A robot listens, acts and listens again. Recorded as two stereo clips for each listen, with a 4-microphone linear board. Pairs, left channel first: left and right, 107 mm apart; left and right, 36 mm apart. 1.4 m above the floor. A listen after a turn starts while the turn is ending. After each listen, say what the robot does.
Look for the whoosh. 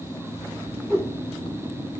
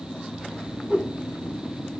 Turn 20° right.
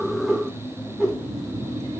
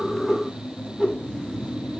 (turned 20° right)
Found it: a whoosh, straight ahead, 2 to 4 m away.